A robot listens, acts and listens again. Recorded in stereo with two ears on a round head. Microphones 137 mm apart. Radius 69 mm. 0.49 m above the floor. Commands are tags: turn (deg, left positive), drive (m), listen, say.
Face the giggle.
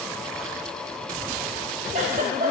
<turn deg="-50"/>
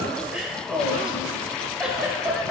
<say>Found it: a giggle, straight ahead, under 1 m away.</say>